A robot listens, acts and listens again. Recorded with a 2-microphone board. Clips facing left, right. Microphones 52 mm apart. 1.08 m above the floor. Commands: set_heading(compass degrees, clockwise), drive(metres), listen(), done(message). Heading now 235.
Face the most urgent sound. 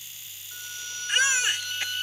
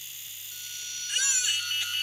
set_heading(180)
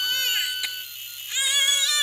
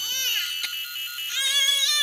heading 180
done("Facing the baby crying.")